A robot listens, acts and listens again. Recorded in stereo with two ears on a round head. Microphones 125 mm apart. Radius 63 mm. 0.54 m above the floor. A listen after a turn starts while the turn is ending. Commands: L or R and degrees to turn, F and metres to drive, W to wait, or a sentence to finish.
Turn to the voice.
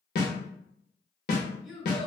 R30
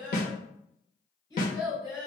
L25
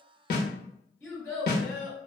L15
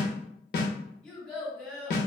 Found it: a child speaking, straight ahead, 1 to 2 m away.